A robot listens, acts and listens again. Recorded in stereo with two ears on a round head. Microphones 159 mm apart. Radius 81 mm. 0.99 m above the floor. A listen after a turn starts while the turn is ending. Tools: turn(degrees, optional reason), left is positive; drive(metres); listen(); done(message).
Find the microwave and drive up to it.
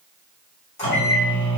turn(degrees=40, reason="The microwave: about 40° left or 140° left.")
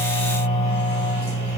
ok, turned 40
turn(degrees=100, reason="So it is at 100° left.")
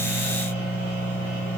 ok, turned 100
turn(degrees=30, reason="The microwave is now 30° left.")
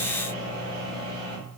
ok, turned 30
drive(metres=1.0)
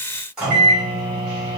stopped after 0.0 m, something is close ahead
done("Something is in my way. I am facing the microwave but have not reached it.")